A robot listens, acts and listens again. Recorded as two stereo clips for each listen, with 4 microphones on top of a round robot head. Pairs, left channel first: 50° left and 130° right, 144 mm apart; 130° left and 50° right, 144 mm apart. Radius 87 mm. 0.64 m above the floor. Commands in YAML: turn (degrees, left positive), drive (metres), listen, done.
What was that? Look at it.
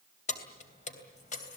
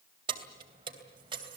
turn: 10
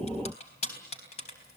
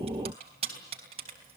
done: "Found it: keys jangling, straight ahead."